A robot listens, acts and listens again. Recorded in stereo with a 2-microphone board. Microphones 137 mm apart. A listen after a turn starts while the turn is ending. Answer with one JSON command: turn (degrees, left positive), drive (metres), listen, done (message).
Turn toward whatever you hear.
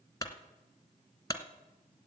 {"turn": 25}
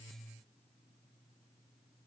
{"listen": true}
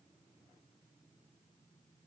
{"done": "I heard a clunk, but can't make it out now. It was about straight ahead or 130° left."}